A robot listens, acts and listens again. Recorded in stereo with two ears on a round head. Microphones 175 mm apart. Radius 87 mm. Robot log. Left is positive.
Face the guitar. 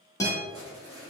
note: The guitar: about 15° left or 165° left.
cmd yaw +15
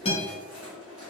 note: So it is at 150° left.
cmd yaw +150
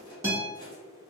note: The guitar is now 15° right.
cmd yaw -15
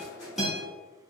end: Facing the guitar.